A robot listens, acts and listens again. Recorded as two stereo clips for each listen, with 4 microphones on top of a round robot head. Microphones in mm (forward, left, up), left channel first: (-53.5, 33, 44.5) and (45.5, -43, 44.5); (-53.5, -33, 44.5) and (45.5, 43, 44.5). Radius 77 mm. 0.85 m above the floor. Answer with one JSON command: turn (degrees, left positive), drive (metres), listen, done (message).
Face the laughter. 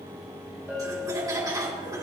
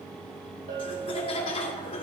{"turn": -100}
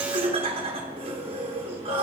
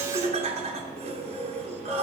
{"done": "Found it: laughter, straight ahead."}